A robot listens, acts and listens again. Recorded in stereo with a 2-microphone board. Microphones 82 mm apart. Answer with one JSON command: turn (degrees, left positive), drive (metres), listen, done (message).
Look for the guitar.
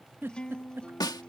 {"turn": 30}
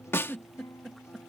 {"turn": 135}
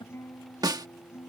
{"turn": 40}
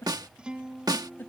{"turn": -15}
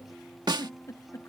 {"done": "Facing the guitar."}